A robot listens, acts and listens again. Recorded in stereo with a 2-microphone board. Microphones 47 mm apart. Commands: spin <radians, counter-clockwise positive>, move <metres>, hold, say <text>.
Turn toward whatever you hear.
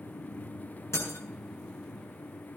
spin 1.57
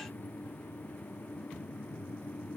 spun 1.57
say I heard breaking glass from this way, but can't make it out now.